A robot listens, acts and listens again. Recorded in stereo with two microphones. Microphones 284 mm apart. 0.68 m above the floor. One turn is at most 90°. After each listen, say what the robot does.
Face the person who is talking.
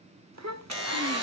Turn 65° right.
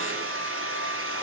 Keep listening.
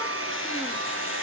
Keep listening.
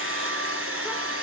I heard a child speaking, but can't make it out now. It was about straight ahead or 50° right.